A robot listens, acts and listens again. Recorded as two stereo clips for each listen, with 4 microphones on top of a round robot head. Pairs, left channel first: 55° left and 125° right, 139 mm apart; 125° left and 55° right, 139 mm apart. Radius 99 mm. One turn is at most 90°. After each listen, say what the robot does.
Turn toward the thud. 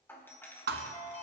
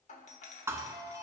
Turn 90° right.
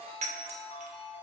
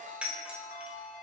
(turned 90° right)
Turn 40° right.
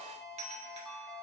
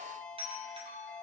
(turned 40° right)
Facing where the thud came from. I can't hear it now.